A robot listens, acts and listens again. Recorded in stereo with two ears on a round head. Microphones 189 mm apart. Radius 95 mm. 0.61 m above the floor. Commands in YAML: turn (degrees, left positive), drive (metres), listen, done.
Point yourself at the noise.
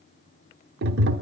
turn: -50
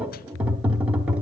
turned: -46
done: "Found it: tapping, straight ahead."